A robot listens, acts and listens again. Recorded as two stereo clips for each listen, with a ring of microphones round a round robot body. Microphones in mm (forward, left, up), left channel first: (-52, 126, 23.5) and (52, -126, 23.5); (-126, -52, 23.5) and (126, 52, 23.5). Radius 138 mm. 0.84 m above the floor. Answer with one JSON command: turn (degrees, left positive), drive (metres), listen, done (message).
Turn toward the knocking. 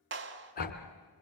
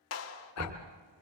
{"turn": 85}
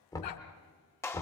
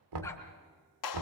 {"turn": 35}
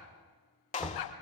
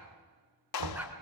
{"turn": 20}
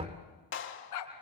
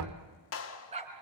{"done": "Facing the knocking."}